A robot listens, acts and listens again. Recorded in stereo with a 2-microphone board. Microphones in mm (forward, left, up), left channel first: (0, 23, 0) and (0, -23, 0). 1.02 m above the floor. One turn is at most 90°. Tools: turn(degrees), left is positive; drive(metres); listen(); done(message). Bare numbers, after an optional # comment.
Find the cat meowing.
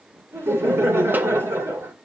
listen()
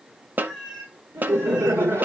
turn(30)
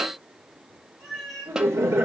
turn(30)
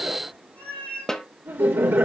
# So it is at 150° left.
turn(90)
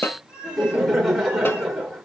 # The cat meowing is now 80° left.
turn(80)
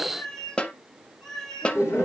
done("Found it: a cat meowing, straight ahead, over 4 m away.")